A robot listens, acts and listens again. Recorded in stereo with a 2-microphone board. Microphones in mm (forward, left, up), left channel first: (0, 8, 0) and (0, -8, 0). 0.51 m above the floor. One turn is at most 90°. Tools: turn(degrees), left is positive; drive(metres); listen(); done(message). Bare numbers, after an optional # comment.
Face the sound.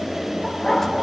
# The dog barking: about 25° left or 155° left.
turn(25)
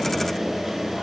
listen()
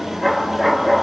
done("Found it: a dog barking, straight ahead.")